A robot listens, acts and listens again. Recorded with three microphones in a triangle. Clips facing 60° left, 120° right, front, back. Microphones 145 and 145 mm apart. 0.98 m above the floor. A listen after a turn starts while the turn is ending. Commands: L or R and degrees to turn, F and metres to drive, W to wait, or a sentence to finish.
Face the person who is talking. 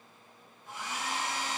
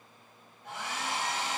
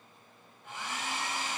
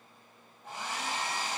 W
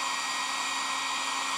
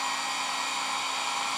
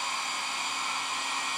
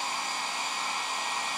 W
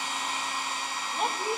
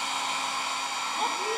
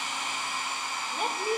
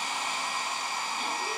R25
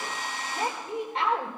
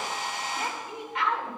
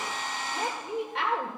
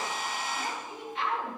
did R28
Found it: a woman speaking, straight ahead, 2 to 4 m away.